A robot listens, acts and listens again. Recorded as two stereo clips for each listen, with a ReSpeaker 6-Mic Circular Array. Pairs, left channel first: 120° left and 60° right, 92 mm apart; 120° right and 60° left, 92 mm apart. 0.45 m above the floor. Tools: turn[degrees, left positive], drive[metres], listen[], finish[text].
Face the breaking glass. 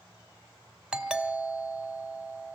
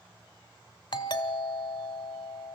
Action: listen[]
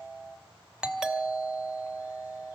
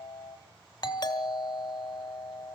Action: listen[]
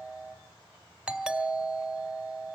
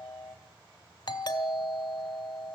Action: finish[I can't make out breaking glass, only a doorbell.]